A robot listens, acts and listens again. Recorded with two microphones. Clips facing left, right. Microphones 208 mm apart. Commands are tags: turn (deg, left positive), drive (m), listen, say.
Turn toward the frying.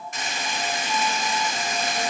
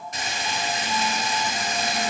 <turn deg="-35"/>
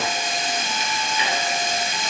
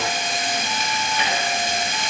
<turn deg="-105"/>
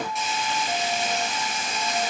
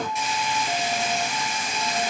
<say>Found it: frying, straight ahead, 2 to 4 m away.</say>